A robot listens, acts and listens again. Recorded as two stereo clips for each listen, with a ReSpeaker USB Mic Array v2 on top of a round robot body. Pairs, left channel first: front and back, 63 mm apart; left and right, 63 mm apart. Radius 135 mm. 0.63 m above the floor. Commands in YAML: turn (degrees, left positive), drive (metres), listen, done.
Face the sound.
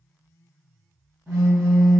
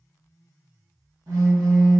turn: -125
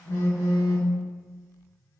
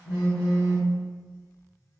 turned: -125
turn: -35
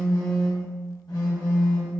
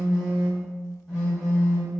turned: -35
done: "Found it: a phone buzzing, straight ahead, under 1 m away."